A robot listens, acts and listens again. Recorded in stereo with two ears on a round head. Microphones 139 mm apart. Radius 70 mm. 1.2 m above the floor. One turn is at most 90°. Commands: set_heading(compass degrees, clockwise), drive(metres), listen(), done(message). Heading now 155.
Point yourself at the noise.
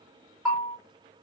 set_heading(185)
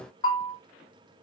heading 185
set_heading(165)
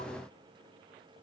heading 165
listen()
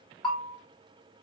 done("Facing the bell.")